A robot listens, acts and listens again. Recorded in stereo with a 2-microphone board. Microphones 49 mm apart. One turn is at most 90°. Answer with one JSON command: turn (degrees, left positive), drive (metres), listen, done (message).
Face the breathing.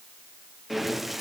{"turn": -30}
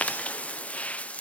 {"turn": 30}
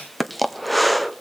{"done": "Found it: breathing, straight ahead."}